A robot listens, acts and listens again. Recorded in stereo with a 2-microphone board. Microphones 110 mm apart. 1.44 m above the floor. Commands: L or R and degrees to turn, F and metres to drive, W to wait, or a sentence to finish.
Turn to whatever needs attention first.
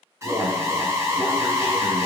R30
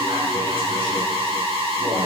R115
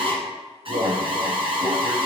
R65
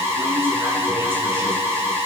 R25
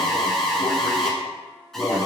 Facing the alarm, 1 to 2 m away.